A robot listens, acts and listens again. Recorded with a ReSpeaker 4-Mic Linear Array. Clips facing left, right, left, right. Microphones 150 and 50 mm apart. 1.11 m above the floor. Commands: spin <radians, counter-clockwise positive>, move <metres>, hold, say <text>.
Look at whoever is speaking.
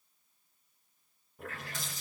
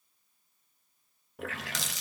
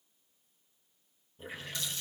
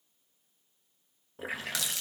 hold
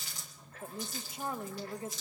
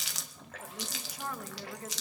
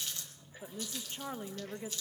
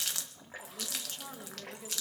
spin 0.44
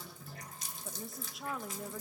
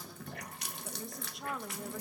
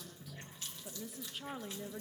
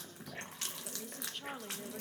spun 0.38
say Found it: a woman speaking, straight ahead.